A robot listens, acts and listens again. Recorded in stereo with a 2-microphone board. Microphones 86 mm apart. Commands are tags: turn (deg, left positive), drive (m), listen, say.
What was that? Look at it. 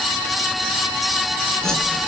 <turn deg="30"/>
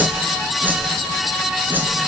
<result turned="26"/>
<turn deg="-20"/>
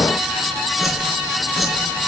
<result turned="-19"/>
<say>Facing the whoosh, 2 to 4 m away.</say>